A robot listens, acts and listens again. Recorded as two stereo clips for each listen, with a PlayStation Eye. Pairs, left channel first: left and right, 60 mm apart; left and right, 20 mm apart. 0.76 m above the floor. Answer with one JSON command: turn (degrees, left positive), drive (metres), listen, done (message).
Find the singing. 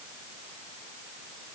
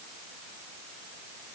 {"listen": true}
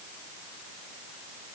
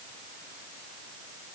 {"listen": true}
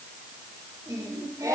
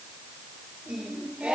{"turn": -90}
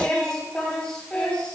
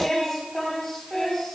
{"turn": 15}
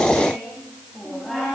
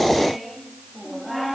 {"done": "Found it: singing, straight ahead."}